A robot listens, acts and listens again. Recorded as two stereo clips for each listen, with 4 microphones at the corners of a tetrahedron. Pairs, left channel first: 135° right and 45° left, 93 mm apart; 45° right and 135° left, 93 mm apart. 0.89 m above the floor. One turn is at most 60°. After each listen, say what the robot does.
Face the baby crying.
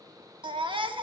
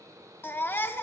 Turn 20° left.
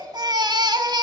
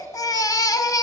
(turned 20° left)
Found it: a baby crying, straight ahead.